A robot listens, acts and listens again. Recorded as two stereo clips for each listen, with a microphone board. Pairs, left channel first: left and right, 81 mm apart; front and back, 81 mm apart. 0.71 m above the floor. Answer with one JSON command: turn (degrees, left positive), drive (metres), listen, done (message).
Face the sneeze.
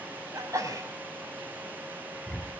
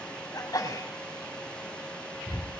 {"turn": -40}
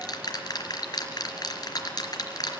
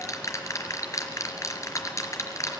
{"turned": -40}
{"done": "I heard a sneeze from this way, but can't make it out now."}